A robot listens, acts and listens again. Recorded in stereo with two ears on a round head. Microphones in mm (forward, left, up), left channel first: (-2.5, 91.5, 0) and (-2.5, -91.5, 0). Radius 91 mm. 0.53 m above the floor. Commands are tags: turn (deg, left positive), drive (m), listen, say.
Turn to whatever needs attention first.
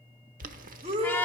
<turn deg="-30"/>
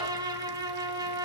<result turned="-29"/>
<listen/>
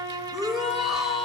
<say>Facing the shout, 2 to 4 m away.</say>